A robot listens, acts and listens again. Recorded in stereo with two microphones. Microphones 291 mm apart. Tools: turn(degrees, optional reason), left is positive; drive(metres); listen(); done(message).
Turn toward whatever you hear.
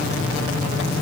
listen()
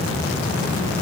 listen()
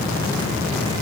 done("I can't make out anything to turn to.")